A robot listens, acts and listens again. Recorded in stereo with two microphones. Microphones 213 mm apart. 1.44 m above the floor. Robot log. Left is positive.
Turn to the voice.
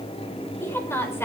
cmd yaw +30
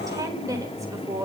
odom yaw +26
note: So it is at 15° right.
cmd yaw -15
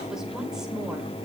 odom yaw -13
cmd idle
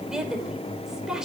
end: Facing the woman speaking, over 4 m away.